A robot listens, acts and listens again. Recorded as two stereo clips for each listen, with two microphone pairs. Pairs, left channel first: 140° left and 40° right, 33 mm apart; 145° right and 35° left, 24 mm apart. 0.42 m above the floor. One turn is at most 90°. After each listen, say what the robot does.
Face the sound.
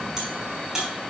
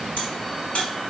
Turn 90° right.
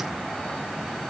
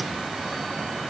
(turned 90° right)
Turn 30° right.
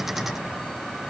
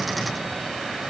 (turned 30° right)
Facing where the crack came from. I can't hear it now.